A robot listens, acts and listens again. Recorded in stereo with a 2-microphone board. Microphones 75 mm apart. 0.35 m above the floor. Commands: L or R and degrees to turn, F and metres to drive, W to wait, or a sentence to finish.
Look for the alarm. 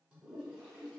W
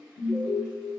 L55
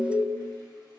L20
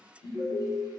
Found it: an alarm, straight ahead, 1 to 2 m away.